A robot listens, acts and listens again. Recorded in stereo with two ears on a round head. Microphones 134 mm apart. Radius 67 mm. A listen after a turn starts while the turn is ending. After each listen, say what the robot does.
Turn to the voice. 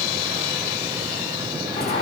Keep listening.
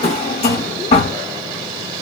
Keep listening.
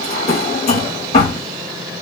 I can't make out anyone speaking to turn to.